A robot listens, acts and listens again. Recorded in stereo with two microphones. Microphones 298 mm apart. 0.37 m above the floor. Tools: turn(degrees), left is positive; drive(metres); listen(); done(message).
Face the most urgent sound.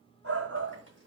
turn(degrees=-55)
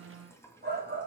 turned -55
turn(degrees=-45)
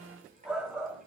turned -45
done("Facing the shout, 2 to 4 m away.")